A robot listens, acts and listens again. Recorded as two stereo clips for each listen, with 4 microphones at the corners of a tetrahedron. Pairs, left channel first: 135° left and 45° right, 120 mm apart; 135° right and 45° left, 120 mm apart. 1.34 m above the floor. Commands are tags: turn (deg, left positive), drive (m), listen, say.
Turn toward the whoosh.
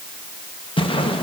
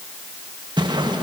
<turn deg="95"/>
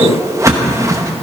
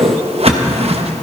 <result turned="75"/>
<turn deg="20"/>
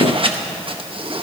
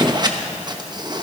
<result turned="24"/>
<say>Facing the whoosh, 1 to 2 m away.</say>